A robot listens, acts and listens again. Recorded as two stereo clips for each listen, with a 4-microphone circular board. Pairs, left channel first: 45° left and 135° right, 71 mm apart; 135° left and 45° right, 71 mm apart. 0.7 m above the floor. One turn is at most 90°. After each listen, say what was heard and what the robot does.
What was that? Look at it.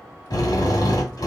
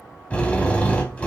The drill: 65° left. Turn 65° left.
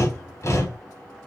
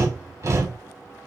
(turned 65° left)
Facing the drill.